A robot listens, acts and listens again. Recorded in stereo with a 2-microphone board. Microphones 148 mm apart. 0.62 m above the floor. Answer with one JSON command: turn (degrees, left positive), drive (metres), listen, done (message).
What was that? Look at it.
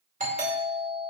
{"turn": -60}
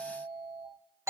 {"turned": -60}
{"turn": -20}
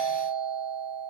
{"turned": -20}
{"done": "Facing the doorbell."}